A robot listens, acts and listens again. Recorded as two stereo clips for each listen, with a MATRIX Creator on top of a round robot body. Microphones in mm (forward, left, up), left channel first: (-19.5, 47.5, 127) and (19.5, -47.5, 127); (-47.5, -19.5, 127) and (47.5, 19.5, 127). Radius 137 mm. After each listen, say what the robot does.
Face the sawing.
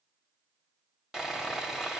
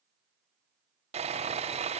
Turn 20° left.
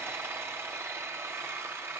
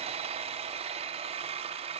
Facing the sawing.